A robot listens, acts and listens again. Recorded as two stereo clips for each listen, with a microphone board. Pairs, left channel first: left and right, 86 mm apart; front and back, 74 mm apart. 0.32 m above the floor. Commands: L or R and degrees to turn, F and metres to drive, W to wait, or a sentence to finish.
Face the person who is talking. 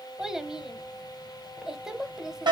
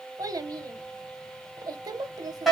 R175
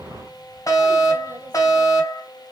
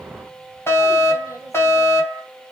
W
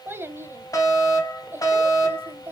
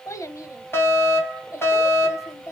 R35
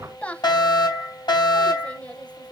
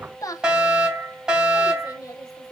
L20
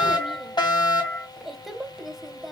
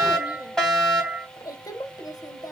Facing the child speaking, under 1 m away.